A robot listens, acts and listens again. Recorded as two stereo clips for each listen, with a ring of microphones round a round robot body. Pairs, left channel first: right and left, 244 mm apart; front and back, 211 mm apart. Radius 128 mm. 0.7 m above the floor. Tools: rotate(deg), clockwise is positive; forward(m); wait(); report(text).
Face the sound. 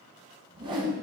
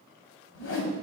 rotate(-20)
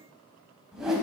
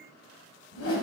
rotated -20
report("Facing the whoosh.")